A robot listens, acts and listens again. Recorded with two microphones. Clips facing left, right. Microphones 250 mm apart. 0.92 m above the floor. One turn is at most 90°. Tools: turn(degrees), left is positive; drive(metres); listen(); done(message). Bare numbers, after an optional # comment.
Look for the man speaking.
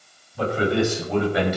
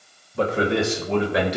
turn(-90)
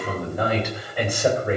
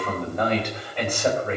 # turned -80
# So it is at 10° left.
turn(10)
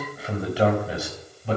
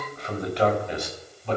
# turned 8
# The man speaking is now 10° left.
turn(10)
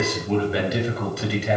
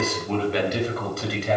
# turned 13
done("Found it: a man speaking, straight ahead, over 4 m away.")